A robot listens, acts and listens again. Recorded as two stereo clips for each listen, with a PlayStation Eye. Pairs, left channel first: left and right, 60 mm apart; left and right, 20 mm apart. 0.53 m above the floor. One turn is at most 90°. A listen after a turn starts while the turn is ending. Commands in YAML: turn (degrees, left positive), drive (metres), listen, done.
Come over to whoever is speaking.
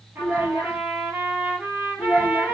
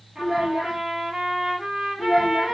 turn: 15
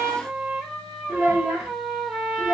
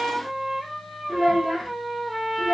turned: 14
turn: 90
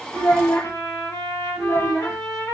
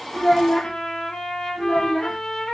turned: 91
turn: 60
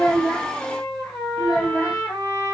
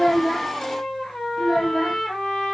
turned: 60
drive: 1.0
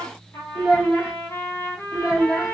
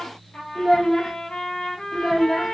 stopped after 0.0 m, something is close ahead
done: "Blocked. The child speaking is further on, straight ahead."